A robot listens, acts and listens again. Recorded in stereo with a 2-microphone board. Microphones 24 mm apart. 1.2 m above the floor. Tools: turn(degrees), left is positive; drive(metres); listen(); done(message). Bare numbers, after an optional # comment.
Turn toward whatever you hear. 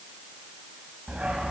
# The dog barking: about 60° right or 120° right.
turn(-60)
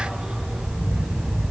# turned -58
# So it is at 45° right.
turn(-45)
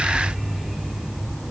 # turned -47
# The dog barking is now 10° left.
turn(10)
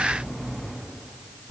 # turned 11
done("Facing the dog barking, over 4 m away.")